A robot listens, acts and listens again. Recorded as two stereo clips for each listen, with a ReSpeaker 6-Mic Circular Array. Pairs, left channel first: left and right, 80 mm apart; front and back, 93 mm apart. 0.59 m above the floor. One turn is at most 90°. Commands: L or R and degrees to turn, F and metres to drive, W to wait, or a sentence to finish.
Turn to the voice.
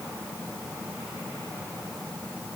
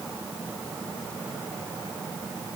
W
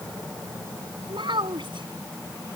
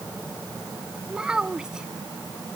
R90
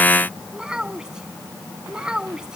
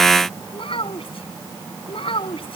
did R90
R10
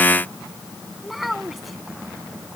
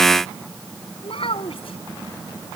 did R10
Found it: a child speaking, straight ahead.